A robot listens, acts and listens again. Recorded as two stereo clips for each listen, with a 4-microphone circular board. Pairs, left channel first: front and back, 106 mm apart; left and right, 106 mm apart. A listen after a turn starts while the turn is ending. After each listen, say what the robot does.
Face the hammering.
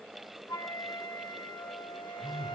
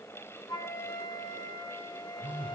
Keep listening.
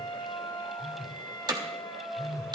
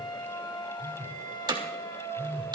Turn 135° right.
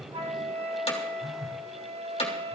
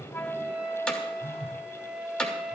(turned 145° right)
Turn 10° left.
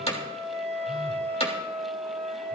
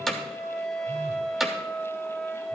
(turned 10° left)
Facing the hammering.